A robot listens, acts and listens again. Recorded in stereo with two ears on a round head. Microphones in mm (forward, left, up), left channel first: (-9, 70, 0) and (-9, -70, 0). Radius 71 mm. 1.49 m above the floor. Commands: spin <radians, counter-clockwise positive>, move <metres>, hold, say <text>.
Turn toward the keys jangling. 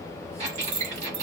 spin -1.57
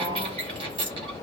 spin -0.17
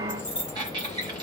say Found it: keys jangling, straight ahead.